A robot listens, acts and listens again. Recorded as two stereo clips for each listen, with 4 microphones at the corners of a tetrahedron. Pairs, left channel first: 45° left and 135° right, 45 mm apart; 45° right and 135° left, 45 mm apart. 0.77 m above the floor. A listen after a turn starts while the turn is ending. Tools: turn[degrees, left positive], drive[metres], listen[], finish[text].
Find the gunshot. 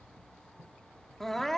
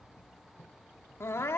Action: listen[]
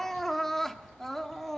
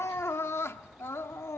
Action: listen[]
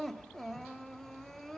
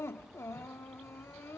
Action: finish[I can't make out a gunshot to turn to.]